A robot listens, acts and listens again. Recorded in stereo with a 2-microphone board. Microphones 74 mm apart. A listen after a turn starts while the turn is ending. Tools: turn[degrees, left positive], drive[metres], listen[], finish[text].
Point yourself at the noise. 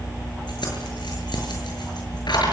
Action: turn[90]
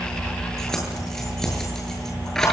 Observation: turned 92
Action: finish[Facing the keys jangling.]